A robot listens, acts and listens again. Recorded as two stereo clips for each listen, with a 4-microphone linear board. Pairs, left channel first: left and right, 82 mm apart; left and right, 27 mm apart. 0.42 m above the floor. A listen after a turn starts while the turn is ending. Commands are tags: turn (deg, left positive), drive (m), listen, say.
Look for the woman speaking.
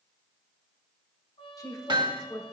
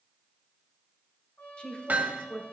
<turn deg="45"/>
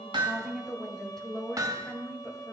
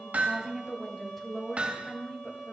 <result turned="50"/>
<turn deg="10"/>
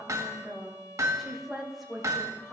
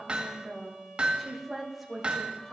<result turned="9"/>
<say>Found it: a woman speaking, straight ahead.</say>